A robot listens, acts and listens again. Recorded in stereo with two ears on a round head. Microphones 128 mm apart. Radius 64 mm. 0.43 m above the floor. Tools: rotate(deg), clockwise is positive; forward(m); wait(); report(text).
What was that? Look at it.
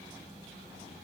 wait()
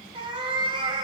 rotate(35)
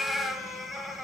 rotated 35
report("Facing the cat meowing, 1 to 2 m away.")